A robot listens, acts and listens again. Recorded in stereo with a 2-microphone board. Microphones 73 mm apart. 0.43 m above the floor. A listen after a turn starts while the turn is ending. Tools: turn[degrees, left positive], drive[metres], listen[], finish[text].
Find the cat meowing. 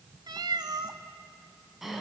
Action: turn[-90]
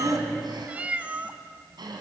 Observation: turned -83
Thought: So it is at 15° right.
Action: turn[-15]
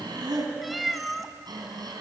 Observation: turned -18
Action: finish[Found it: a cat meowing, straight ahead, 1 to 2 m away.]